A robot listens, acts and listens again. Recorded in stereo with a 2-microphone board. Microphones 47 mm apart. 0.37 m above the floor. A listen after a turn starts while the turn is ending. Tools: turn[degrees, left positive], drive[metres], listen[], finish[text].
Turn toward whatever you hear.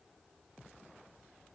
Action: listen[]
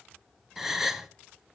Action: turn[-30]
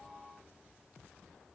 Action: listen[]
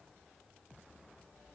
Action: finish[I heard a gasp, but can't make it out now. It was about 20° left or 140° right.]